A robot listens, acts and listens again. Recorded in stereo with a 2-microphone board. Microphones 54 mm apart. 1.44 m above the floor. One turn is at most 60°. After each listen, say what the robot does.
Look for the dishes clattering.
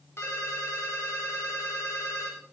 Keep listening.
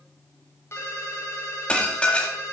Turn 20° left.
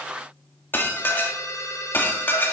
Turn 60° left.
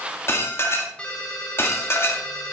Turn 55° left.
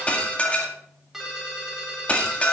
Turn 25° left.
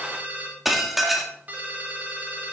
Found it: dishes clattering, straight ahead.